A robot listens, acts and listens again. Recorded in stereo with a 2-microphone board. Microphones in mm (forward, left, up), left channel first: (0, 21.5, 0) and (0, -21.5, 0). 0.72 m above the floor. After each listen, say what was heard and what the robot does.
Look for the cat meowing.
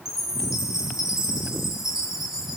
Keep listening.
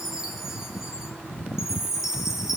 Keep listening.
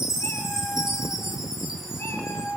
Turn 90° left.
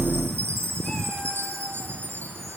Keep listening.
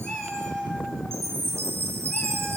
Found it: a cat meowing, straight ahead, over 4 m away.